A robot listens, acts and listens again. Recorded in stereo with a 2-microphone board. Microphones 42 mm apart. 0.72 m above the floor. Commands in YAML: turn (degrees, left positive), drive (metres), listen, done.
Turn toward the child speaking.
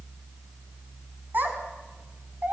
turn: -45
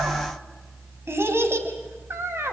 turn: -75
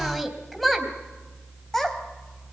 done: "Found it: a child speaking, straight ahead, 2 to 4 m away."